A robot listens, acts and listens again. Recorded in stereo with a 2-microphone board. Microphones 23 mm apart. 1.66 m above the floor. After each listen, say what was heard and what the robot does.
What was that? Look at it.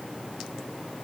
Keep listening.
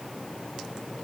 Keep listening.
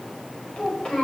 The child speaking: about 35° left or 145° left. Turn 35° left.
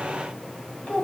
So it is at 110° left. Turn 110° left.
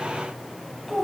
The child speaking is now 20° left. Turn 20° left.
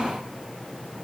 Keep listening.
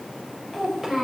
The child speaking is now 10° right. Turn 10° right.
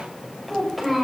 Facing the child speaking, over 4 m away.